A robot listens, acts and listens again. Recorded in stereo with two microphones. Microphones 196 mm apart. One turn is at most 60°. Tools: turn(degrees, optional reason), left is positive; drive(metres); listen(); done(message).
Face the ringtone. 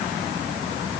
listen()
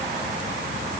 listen()
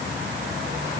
done("I can't make out a ringtone to turn to.")